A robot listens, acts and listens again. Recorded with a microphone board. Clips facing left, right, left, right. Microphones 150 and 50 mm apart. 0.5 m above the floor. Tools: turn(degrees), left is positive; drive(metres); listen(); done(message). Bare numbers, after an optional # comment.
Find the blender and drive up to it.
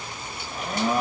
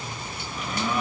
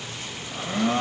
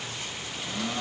# The blender: about 45° left or 135° left.
turn(45)
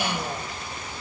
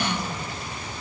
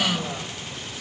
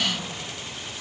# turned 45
# So it is at 85° left.
turn(85)
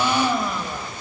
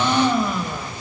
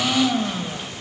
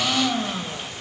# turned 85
drive(1.0)
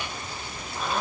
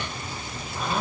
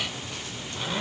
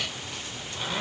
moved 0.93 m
drive(1.0)
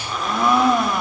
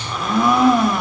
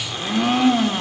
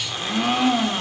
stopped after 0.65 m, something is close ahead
done("Arrived at the blender, straight ahead.")